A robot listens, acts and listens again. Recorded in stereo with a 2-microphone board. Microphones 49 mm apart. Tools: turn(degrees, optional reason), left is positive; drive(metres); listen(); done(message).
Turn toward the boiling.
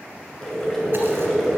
turn(degrees=30)
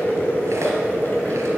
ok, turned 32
turn(degrees=140, reason="So it is at 140° left.")
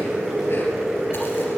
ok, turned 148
done("Found it: boiling, straight ahead, 2 to 4 m away.")